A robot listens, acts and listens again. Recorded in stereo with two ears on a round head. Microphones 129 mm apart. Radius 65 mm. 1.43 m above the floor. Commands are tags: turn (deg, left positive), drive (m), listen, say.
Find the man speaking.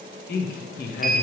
<turn deg="65"/>
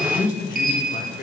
<turn deg="65"/>
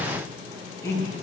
<turn deg="20"/>
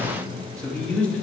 <turn deg="10"/>
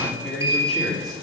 <say>Facing the man speaking, 2 to 4 m away.</say>